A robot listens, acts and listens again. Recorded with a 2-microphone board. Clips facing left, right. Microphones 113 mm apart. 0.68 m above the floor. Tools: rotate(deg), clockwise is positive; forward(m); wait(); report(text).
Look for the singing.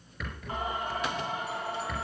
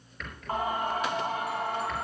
rotate(55)
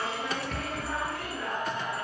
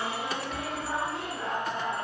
rotate(25)
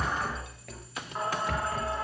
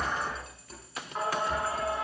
report("Facing the singing.")